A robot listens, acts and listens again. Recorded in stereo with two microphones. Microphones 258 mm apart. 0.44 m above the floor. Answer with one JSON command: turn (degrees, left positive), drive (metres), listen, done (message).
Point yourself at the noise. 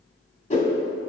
{"turn": 25}
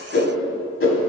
{"turn": 130}
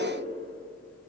{"listen": true}
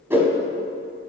{"turn": -10}
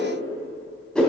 {"done": "Facing the whoosh."}